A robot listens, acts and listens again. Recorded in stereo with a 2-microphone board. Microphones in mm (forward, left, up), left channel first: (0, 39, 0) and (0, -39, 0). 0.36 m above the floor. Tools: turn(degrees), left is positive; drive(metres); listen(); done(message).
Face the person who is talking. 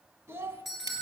turn(degrees=-30)
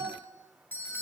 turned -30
turn(degrees=-120)
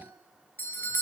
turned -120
listen()
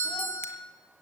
listen()
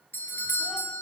done("I heard a child speaking from this way, but can't make it out now.")